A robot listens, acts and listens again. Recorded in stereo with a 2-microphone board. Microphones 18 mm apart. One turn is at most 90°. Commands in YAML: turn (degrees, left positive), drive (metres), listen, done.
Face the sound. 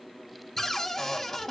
turn: 20
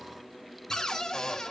turn: 90
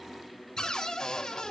turn: 55
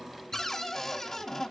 turn: 25
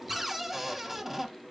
turn: -15
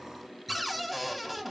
done: "Facing the cupboard door, 1 to 2 m away."